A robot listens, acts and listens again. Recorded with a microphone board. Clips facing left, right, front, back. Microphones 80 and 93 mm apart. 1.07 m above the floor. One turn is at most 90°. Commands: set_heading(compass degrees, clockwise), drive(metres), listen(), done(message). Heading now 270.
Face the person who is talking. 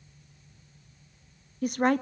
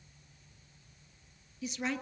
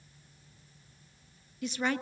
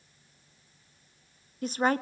set_heading(180)
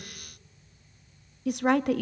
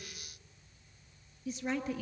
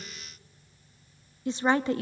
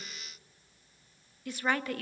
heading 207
set_heading(142)
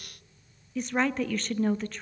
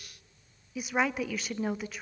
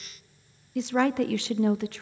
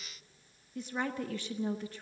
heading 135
done("Found it: a woman speaking, straight ahead.")